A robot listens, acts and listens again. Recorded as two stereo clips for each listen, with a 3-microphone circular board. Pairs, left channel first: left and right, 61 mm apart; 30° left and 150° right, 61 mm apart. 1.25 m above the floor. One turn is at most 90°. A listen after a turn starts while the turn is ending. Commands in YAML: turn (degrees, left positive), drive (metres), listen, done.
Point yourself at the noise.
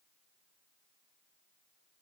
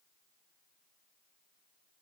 listen: true
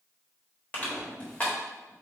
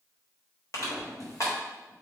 turn: 25
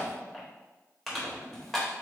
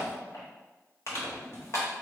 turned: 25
done: "Facing the crushing."